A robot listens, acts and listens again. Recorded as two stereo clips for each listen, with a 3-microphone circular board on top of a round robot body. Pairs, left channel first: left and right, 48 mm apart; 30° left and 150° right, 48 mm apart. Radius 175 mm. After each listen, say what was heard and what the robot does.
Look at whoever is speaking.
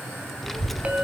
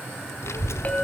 Facing the child speaking.